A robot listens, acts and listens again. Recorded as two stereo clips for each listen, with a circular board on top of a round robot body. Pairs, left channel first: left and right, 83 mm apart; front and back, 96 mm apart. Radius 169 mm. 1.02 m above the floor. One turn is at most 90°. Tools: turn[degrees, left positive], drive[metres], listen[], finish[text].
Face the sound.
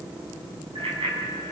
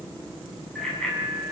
Thought: The bicycle bell: 80° right.
Action: turn[-80]
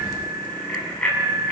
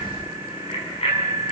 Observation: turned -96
Thought: The bicycle bell is now 15° left.
Action: turn[15]
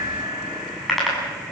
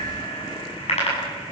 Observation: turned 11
Action: finish[Facing the bicycle bell.]